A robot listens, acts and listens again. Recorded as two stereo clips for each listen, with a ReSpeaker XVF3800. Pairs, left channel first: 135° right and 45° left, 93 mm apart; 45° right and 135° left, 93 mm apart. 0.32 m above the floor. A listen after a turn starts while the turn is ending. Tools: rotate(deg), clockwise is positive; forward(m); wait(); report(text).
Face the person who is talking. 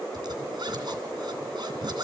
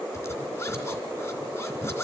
wait()
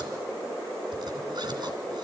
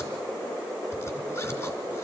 wait()
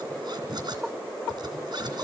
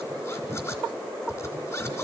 report("I can't make out anyone speaking to turn to.")